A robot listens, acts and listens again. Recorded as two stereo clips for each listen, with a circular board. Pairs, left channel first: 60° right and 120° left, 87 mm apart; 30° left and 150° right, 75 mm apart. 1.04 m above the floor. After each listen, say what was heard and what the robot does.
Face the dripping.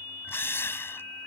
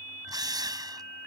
Keep listening.
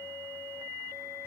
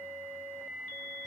Keep listening.
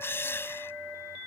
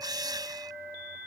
I can't make out dripping, only a drill.